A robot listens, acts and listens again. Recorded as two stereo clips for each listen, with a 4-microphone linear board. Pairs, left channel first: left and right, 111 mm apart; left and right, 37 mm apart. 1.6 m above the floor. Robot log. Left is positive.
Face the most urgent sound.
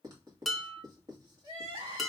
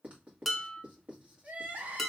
note: The crying: about 60° right or 120° right.
cmd yaw -60
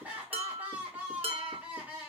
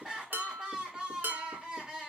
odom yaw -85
note: So it is at 20° right.
cmd yaw -20
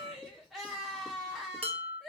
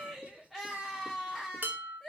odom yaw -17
end: Found it: crying, straight ahead.